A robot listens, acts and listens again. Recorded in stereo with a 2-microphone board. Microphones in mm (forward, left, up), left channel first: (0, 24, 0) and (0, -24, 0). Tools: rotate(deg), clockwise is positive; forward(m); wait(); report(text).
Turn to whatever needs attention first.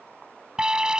rotate(30)
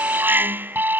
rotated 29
rotate(140)
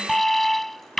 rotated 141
report("Found it: an alarm, straight ahead.")